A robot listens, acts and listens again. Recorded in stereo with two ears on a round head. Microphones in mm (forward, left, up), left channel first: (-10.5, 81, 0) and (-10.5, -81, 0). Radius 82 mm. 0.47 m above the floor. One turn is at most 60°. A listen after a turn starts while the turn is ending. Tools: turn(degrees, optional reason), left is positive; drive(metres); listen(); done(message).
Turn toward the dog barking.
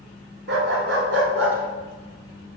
turn(degrees=-60)
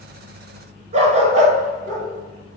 turn(degrees=-45, reason="So it is at 45° right.")
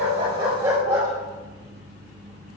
turn(degrees=-20, reason="The dog barking is now 20° right.")
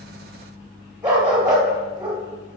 turn(degrees=-10, reason="The dog barking is now 10° right.")
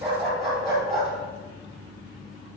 done("Facing the dog barking.")